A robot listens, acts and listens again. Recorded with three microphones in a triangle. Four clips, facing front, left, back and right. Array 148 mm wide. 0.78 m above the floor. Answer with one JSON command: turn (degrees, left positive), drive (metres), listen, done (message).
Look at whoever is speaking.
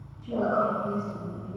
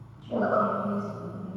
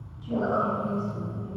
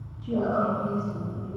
{"turn": -80}
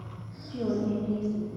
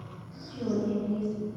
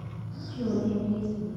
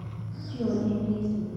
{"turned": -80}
{"turn": -25}
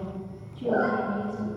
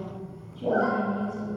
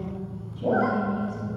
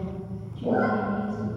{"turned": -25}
{"done": "Facing the woman speaking, 1 to 2 m away."}